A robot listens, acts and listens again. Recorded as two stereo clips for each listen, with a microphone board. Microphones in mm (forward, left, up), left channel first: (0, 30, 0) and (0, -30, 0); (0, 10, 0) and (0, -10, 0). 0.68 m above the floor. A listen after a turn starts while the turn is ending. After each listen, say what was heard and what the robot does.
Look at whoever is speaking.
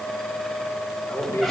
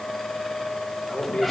The man speaking: about 40° left or 140° left. Turn 40° left.
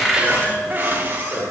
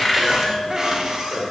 Found it: a man speaking, straight ahead, 2 to 4 m away.